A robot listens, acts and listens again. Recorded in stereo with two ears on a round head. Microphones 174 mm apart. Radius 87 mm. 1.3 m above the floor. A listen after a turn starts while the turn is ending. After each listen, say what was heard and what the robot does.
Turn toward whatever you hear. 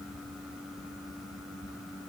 Keep listening.
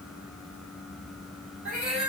Turn 30° right.
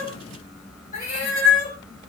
So it is at 40° left. Turn 40° left.
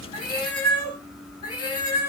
The cat meowing is now 30° left. Turn 30° left.
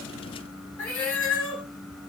Facing the cat meowing, 2 to 4 m away.